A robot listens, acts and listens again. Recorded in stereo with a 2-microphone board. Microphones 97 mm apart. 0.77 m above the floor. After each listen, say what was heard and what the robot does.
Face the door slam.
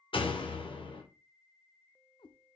The door slam: about 65° left or 115° left. Turn 65° left.
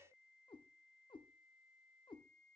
Keep listening.
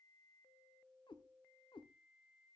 I heard a door slam, but can't make it out now. It was about straight ahead or 50° left.